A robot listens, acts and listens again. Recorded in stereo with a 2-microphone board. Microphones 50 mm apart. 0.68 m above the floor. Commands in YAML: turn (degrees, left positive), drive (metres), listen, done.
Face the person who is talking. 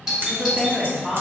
turn: 30
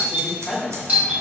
turn: 150
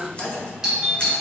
turn: 25
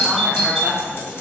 done: "Facing the woman speaking, 1 to 2 m away."